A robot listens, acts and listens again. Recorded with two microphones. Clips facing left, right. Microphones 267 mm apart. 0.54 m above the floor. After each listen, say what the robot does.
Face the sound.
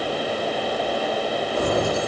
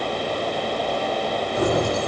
Turn 70° right.
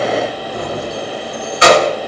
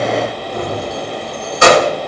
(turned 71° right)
Turn 50° right.
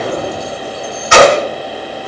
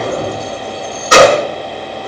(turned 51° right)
Turn 45° right.
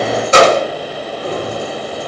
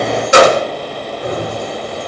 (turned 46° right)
Turn 10° right.
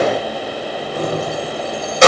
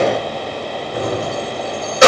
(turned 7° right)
Facing the keys jangling.